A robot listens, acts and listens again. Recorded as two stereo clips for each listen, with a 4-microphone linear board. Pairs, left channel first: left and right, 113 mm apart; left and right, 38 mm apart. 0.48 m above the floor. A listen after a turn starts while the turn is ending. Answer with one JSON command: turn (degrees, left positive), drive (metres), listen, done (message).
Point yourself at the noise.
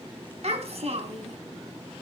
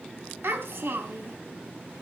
{"turn": -70}
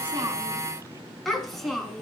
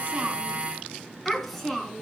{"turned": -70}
{"done": "Found it: a child speaking, straight ahead, 2 to 4 m away."}